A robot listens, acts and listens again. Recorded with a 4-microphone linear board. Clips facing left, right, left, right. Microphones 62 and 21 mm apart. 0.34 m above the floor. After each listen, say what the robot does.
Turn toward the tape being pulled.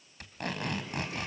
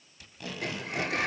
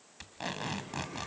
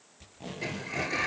Turn 60° left.
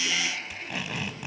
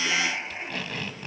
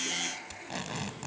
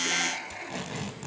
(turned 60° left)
Turn 15° left.
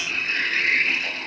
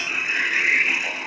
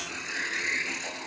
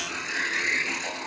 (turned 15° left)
Keep listening.
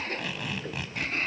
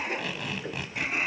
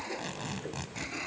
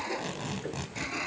Found it: tape being pulled, straight ahead, 2 to 4 m away.